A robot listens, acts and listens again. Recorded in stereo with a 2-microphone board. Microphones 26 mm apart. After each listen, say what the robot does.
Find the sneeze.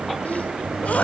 Turn 75° left.
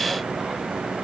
Keep listening.
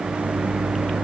I heard a sneeze, but can't make it out now. It was about straight ahead or 30° left.